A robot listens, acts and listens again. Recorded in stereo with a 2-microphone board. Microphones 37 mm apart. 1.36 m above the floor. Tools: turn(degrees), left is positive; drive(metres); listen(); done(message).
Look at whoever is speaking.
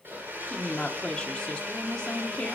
turn(degrees=20)
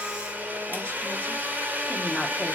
listen()
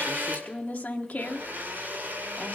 turn(degrees=140)
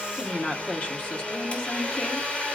turn(degrees=40)
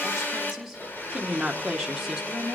done("Found it: a woman speaking, straight ahead.")